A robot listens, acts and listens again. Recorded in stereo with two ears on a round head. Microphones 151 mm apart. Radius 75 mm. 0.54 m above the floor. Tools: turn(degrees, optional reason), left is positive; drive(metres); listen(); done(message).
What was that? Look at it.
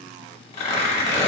turn(degrees=40, reason="The tearing paper: about 40° left or 140° left.")
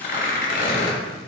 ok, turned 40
turn(degrees=90, reason="So it is at 90° left.")
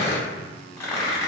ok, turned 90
turn(degrees=20, reason="The tearing paper is now 20° left.")
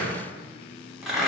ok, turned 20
done("Facing the tearing paper, under 1 m away.")